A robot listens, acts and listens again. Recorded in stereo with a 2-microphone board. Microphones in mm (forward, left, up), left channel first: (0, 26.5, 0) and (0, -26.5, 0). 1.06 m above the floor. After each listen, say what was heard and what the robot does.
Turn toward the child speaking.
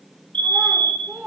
The child speaking: about 35° right or 145° right. Turn 35° right.
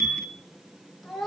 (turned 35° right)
Found it: a child speaking, straight ahead, 2 to 4 m away.